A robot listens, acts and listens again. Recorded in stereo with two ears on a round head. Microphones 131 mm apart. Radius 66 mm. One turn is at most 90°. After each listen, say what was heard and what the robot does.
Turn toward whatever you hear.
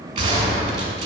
The gunshot: about 35° right or 145° right. Turn 35° right.
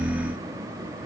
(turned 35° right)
Keep listening.
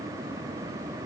I heard a gunshot, but can't make it out now. It was about straight ahead or 110° right.